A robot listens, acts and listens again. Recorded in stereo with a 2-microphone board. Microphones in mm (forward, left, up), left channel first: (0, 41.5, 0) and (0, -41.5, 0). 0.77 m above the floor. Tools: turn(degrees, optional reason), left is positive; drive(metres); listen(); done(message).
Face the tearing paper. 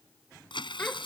turn(degrees=90)
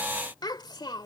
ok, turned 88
listen()
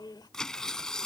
turn(degrees=10, reason="The tearing paper is now 10° left.")
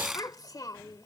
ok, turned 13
done("Found it: tearing paper, straight ahead.")